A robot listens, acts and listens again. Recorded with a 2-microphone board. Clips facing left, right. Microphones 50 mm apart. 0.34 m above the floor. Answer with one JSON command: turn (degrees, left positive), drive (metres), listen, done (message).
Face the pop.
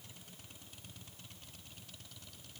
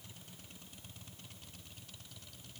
{"listen": true}
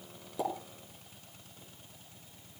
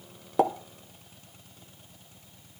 {"turn": -60}
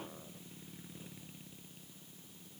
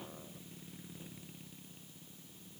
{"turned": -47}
{"listen": true}
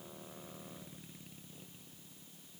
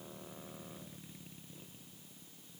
{"done": "I heard a pop, but can't make it out now. It was about 15° right or 70° right."}